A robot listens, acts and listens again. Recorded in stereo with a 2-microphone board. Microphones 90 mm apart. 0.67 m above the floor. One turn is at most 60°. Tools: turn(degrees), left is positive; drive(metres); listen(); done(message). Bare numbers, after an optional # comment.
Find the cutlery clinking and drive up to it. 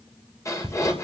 # The cutlery clinking: about 65° right or 115° right.
turn(-60)
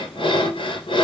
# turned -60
listen()
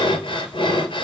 listen()
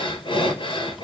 done("I heard cutlery clinking, but can't make it out now. It was about 5° right or 55° right. I did not reach it.")